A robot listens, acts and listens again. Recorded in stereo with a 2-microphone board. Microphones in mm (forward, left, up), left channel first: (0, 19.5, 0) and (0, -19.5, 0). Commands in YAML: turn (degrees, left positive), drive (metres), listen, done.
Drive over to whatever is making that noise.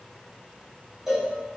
turn: -30
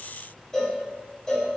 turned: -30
turn: 15
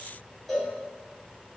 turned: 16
drive: 1.0
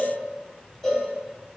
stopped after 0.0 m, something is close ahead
turn: 15
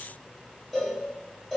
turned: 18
done: "Blocked. The cowbell is further on, straight ahead."